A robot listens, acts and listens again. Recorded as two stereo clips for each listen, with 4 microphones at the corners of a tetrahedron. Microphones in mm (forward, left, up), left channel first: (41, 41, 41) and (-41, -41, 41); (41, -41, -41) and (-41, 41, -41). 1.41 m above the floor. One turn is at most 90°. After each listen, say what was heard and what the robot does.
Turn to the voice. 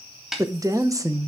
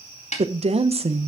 The woman speaking: 165° left. Turn 90° left.
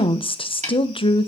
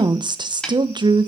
The woman speaking is now 85° left. Turn 85° left.
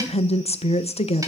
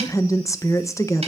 The woman speaking is now 20° left. Turn 20° left.
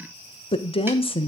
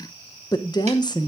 The woman speaking is now 10° left. Turn 10° left.
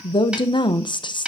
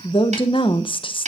Found it: a woman speaking, straight ahead, 1 to 2 m away.